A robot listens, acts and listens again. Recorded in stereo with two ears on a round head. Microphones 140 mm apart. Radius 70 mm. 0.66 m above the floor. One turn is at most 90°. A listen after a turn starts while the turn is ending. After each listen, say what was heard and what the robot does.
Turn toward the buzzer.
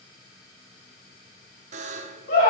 The buzzer: about 45° right or 135° right. Turn 45° right.
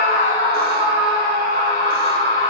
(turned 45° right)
Keep listening.
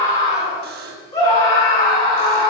So it is at 85° right. Turn 85° right.
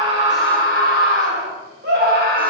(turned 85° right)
Keep listening.
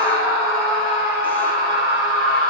Keep listening.
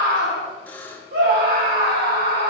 The buzzer is now 10° left. Turn 10° left.
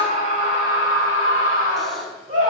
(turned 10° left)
Keep listening.
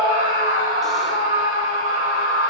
Keep listening.
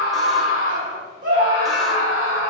Facing where the buzzer came from. I can't hear it now.